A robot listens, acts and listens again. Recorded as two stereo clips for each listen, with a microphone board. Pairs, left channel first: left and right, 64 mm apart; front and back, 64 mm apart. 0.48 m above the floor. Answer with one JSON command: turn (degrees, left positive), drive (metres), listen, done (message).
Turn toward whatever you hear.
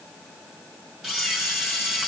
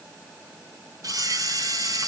{"turn": -170}
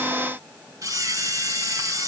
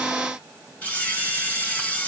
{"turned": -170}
{"turn": -60}
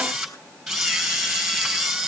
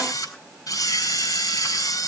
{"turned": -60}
{"done": "Facing the camera shutter."}